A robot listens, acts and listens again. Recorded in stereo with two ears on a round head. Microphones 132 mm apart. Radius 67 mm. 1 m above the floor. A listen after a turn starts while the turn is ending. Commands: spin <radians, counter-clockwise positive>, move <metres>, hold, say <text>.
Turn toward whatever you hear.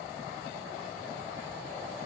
hold
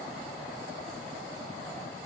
hold
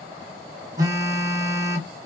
spin -0.35
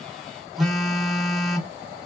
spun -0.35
say Found it: a phone buzzing, straight ahead.